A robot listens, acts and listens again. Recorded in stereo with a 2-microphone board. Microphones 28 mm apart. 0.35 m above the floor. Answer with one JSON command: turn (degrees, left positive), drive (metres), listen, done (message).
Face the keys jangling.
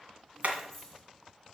{"turn": 30}
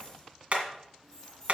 {"turn": 20}
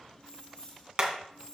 {"turn": 155}
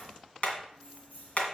{"turn": 70}
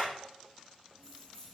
{"turn": 20}
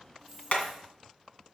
{"done": "Found it: keys jangling, straight ahead, 2 to 4 m away."}